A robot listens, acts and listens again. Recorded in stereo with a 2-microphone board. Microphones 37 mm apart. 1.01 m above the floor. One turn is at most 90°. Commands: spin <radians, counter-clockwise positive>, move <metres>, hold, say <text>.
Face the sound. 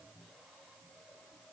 hold
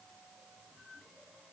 hold
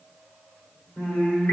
spin 1.57
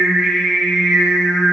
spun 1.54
say Facing the singing, 2 to 4 m away.